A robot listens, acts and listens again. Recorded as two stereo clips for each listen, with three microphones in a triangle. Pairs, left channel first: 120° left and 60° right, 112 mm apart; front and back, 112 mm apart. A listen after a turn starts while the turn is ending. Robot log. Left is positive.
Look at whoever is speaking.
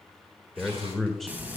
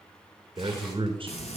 note: The man speaking: 150° right.
cmd yaw -150
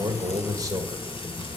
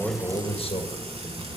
note: The man speaking is now 10° right.
cmd yaw -10
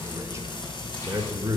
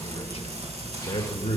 end: Facing the man speaking.